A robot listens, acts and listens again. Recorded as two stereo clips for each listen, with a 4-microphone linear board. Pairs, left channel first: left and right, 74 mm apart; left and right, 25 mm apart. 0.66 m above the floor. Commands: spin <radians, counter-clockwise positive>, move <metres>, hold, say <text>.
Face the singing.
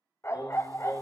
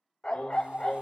spin 1.13
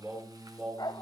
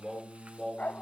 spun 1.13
say Facing the singing.